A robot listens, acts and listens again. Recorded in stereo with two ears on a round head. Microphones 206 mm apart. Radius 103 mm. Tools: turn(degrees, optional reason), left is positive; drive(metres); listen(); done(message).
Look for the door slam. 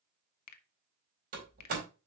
turn(degrees=-40, reason="The door slam: about 40° right or 140° right.")
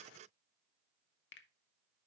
listen()
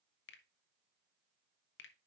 done("I heard a door slam, but can't make it out now. It was about straight ahead or 100° right.")